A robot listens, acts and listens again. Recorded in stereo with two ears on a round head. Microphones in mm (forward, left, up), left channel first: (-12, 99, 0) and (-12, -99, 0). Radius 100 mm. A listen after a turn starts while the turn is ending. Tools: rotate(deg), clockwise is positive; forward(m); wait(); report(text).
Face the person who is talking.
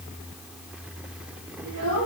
rotate(65)
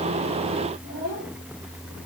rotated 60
report("Found it: a child speaking, straight ahead, over 4 m away.")